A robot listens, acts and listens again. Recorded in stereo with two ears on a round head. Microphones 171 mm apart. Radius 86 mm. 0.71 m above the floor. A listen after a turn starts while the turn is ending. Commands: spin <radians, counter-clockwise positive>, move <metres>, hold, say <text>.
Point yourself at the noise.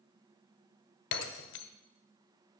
spin 1.22
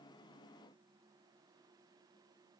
hold
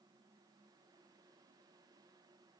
say I heard breaking glass, but can't make it out now. It was about straight ahead or 40° left.